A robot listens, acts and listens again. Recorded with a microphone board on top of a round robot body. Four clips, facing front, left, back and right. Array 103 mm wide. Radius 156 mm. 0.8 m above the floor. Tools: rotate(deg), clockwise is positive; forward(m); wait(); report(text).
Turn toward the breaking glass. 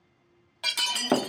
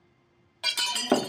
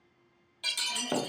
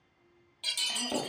rotate(-45)
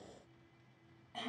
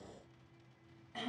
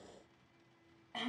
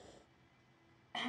report("Facing where the breaking glass came from. I can't hear it now.")